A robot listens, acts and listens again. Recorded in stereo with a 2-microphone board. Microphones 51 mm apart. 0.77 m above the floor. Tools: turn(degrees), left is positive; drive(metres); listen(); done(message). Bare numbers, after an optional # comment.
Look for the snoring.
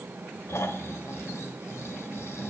# The snoring: about 60° left or 120° left.
turn(60)
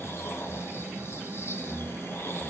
# So it is at 60° left.
turn(60)
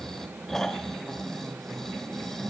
# The snoring is now 10° left.
turn(10)
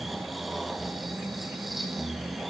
done("Found it: snoring, straight ahead, 1 to 2 m away.")